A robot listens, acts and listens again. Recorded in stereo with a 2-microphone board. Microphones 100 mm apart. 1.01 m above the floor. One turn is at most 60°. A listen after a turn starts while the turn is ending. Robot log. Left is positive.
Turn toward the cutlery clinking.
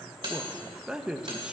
note: The cutlery clinking: about 55° right or 125° right.
cmd yaw -55
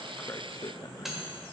end: Facing the cutlery clinking, 2 to 4 m away.